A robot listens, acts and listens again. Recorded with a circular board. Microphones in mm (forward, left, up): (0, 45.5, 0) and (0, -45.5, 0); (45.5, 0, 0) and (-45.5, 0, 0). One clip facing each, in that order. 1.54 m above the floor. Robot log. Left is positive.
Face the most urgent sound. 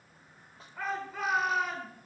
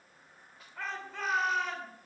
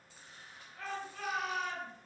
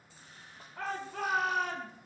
note: The shout: 175° left.
cmd yaw +175
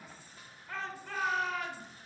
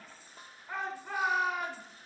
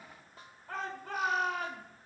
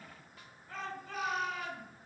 note: The shout is now 20° right.
cmd yaw -20
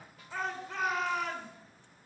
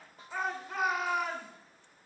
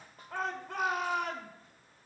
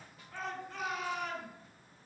note: The shout is now 10° right.
cmd yaw -10
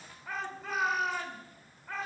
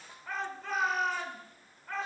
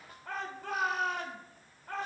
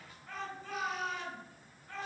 end: Facing the shout.